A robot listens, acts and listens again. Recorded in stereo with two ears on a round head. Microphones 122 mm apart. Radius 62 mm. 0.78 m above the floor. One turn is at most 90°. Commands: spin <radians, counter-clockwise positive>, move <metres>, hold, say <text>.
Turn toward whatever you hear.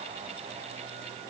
hold
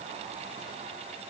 hold
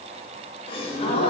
spin 0.70
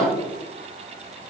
spin 0.17
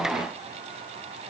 say I heard a gasp from this way, but can't make it out now.